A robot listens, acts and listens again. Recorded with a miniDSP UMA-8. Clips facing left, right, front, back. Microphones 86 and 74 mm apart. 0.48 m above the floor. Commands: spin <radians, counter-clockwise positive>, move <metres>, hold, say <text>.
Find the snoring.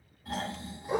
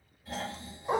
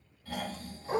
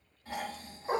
spin 2.01
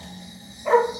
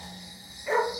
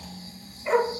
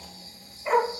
spin -0.26
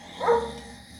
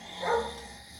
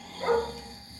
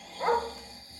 say Facing the snoring.